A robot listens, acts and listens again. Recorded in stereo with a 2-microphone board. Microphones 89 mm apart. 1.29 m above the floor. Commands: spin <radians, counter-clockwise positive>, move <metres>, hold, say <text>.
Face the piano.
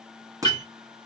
spin 0.87
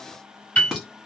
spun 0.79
spin 0.35
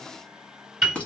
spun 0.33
say Found it: a piano, straight ahead.